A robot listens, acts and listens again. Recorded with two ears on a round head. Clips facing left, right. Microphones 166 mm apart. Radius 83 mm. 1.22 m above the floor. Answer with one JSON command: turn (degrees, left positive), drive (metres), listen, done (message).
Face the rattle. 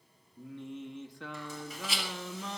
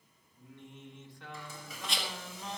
{"turn": 30}
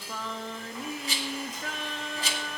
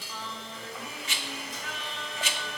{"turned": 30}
{"turn": 145}
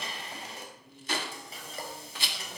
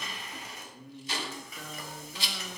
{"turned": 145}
{"turn": 45}
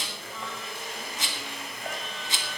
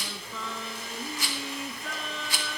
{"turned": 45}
{"turn": 20}
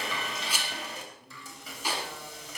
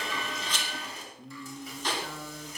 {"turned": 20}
{"turn": 10}
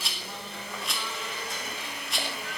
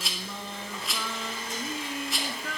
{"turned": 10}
{"done": "Found it: a rattle, straight ahead, 1 to 2 m away."}